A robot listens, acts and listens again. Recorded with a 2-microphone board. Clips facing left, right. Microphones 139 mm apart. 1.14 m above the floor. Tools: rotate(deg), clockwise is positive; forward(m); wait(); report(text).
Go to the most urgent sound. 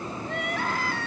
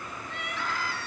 rotate(-60)
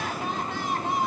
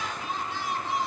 rotate(-60)
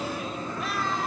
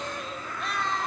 forward(1.0)
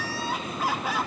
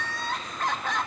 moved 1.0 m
rotate(-10)
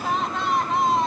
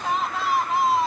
forward(1.0)
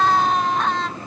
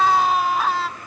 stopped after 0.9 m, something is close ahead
report("Arrived at the crying, straight ahead.")